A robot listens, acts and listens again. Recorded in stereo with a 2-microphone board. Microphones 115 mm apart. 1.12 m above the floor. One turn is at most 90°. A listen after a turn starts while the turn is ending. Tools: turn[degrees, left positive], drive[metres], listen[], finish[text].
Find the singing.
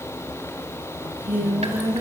Thought: The singing: about 20° right or 160° right.
Action: turn[-20]
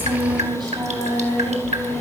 Thought: So it is at 140° right.
Action: turn[-90]
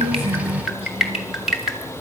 Thought: Nothing new. It was at 50° right.
Action: turn[-50]
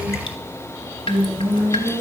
Thought: The singing is now 10° right.
Action: turn[-10]
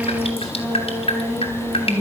Action: finish[Facing the singing, over 4 m away.]